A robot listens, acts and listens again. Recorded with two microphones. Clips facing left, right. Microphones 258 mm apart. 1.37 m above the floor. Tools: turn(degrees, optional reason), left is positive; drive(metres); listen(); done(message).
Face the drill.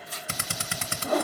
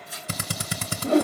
turn(degrees=-40, reason="The drill: about 40° right or 140° right.")
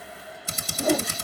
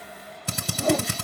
turn(degrees=-95, reason="So it is at 95° right.")
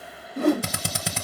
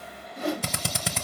done("Found it: a drill, straight ahead, under 1 m away.")